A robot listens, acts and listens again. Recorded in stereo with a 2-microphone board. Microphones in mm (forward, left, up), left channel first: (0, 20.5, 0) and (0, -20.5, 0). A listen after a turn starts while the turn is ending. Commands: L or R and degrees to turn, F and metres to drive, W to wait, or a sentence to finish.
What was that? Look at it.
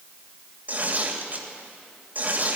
R45
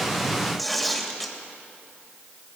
Facing the tearing paper, 2 to 4 m away.